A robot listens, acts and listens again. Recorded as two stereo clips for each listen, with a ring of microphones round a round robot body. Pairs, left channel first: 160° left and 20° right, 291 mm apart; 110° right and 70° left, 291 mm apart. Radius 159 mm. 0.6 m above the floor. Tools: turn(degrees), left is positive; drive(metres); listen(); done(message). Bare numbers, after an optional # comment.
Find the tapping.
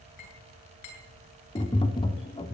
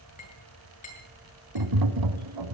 # The tapping: 85° left.
turn(85)
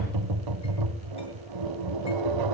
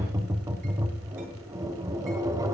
# The tapping is now 10° right.
turn(-10)
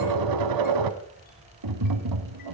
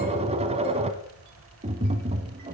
done("Found it: tapping, straight ahead.")